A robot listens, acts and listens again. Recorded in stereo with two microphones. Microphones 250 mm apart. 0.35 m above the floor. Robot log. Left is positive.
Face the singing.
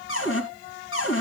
cmd idle
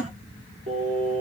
note: The singing: about 25° right or 155° right.
cmd yaw -25
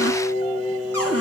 end: Found it: singing, straight ahead.